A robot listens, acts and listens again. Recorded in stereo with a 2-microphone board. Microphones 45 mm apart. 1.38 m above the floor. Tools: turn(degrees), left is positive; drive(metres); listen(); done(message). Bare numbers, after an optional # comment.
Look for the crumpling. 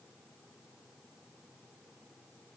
listen()
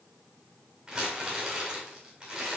turn(-30)
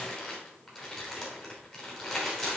# So it is at 15° left.
turn(15)
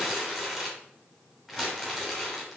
done("Found it: crumpling, straight ahead.")